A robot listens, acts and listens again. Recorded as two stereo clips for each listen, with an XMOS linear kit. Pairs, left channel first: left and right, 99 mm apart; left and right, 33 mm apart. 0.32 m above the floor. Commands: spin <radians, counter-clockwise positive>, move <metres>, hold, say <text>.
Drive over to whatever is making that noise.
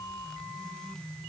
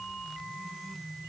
hold
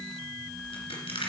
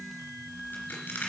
spin 1.57
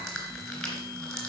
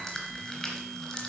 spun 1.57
move 1.0
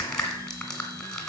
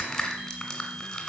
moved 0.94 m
spin 0.17
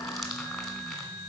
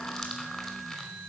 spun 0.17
hold
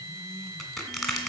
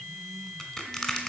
move 1.0
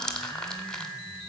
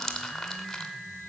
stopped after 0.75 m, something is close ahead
spin 0.17
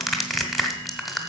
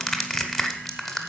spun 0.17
say I am next to the crushing.